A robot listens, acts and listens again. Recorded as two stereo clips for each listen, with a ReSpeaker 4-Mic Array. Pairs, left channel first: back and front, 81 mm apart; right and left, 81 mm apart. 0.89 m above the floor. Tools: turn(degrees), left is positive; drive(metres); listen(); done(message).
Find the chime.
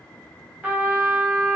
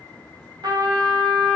listen()
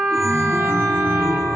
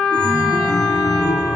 turn(degrees=-55)
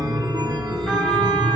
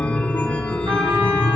turn(degrees=-20)
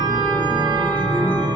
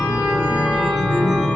done("Facing the chime, 1 to 2 m away.")